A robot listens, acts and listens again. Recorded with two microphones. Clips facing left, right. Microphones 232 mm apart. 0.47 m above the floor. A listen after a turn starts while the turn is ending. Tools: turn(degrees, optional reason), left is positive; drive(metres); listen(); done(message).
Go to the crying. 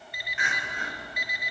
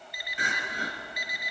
turn(degrees=-40, reason="The crying: about 40° right or 140° right.")
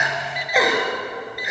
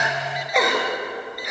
drive(metres=1.0)
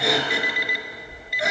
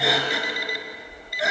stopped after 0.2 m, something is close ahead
done("Blocked. The crying is further on, straight ahead.")